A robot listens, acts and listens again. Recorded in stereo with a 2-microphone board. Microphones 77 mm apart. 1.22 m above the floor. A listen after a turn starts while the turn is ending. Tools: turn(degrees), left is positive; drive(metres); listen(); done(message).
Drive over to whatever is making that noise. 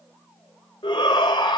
turn(degrees=90)
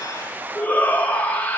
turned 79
turn(degrees=20)
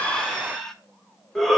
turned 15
drive(metres=1.0)
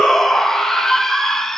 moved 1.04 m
drive(metres=1.0)
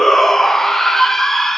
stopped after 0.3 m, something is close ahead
done("I am next to the shout.")